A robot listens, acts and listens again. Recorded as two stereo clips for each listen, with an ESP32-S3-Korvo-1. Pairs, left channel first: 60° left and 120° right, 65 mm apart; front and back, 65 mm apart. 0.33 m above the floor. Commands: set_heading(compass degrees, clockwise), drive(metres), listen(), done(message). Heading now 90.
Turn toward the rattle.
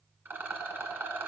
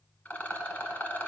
set_heading(155)
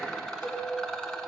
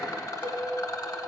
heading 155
set_heading(175)
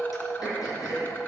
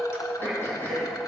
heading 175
listen()
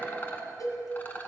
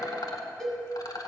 done("Found it: a rattle, straight ahead, 1 to 2 m away.")